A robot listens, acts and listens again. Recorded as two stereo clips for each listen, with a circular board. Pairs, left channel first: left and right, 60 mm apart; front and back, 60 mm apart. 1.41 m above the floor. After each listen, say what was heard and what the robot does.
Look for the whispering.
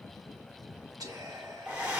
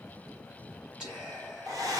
The whispering: 105° right. Turn 105° right.
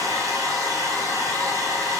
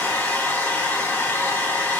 Keep listening.
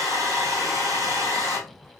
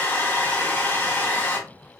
Keep listening.
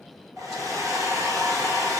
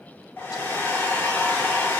Facing where the whispering came from. I can't hear it now.